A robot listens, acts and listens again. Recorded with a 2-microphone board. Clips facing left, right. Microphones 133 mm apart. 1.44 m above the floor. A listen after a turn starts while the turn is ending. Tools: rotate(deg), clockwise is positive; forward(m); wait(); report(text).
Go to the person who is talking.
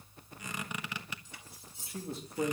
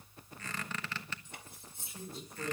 rotate(-65)
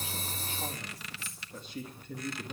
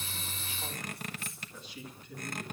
rotate(-45)
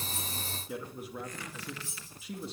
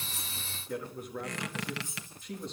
forward(1.0)
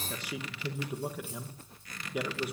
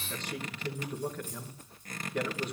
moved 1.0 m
rotate(-10)
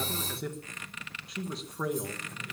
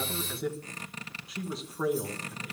forward(1.0)
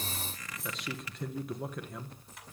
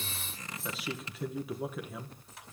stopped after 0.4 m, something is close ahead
report("I am next to the man speaking.")